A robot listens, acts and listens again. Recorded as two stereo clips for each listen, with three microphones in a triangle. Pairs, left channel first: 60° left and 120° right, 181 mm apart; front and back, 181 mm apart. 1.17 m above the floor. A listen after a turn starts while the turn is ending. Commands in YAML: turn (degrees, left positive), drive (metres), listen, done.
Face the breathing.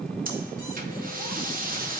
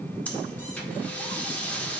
turn: -80
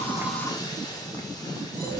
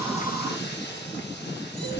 turn: -10
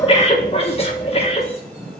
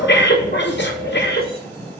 done: "Facing the breathing."